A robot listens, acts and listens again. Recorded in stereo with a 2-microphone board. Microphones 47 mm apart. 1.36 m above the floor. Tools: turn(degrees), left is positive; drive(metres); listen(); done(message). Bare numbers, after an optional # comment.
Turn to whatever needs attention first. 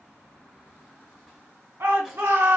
# The shout: about 60° right or 120° right.
turn(-60)
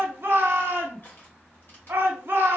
# So it is at 55° right.
turn(-55)
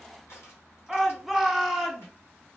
done("Facing the shout.")